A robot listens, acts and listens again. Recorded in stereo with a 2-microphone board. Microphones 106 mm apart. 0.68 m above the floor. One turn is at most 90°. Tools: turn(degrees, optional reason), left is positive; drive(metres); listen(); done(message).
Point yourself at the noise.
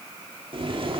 turn(degrees=-55, reason="The boiling: about 55° right or 125° right.")
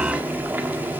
turn(degrees=-20, reason="So it is at 20° right.")
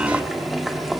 done("Found it: boiling, straight ahead, 1 to 2 m away.")